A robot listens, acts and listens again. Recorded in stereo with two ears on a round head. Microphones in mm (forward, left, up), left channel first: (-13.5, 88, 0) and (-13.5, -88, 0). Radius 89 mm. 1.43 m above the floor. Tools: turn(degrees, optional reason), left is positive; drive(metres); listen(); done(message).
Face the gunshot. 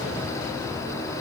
listen()
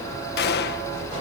turn(degrees=55, reason="The gunshot: about 55° left or 125° left.")
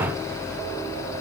listen()
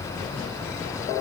done("I heard a gunshot, but can't make it out now. It was about straight ahead or 70° left.")